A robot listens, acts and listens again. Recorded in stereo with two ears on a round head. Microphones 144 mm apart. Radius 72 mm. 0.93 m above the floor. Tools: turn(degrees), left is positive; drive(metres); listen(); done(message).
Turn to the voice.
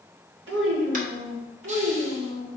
turn(degrees=-90)
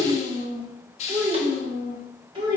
turn(degrees=-35)
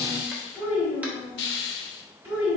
turn(degrees=-15)
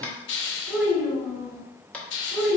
done("Facing the child speaking, 2 to 4 m away.")